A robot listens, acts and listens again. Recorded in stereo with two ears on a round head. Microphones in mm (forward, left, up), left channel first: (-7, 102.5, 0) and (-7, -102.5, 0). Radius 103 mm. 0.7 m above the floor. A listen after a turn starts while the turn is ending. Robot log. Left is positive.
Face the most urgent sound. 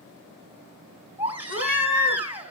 cmd yaw -30
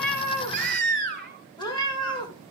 note: So it is at 140° right.
cmd yaw -140
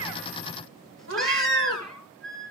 end: Found it: a baby crying, straight ahead.